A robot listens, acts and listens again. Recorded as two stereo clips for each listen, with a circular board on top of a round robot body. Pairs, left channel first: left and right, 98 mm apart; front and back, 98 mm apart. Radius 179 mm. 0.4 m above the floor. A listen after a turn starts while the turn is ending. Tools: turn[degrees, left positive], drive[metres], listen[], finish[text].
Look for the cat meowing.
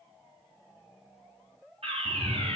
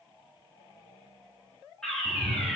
Thought: The cat meowing: 130° right.
Action: turn[-130]
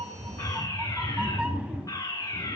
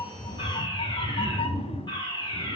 Thought: The cat meowing is now 10° right.
Action: turn[-10]
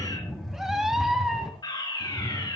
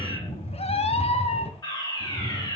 Action: finish[Facing the cat meowing, 1 to 2 m away.]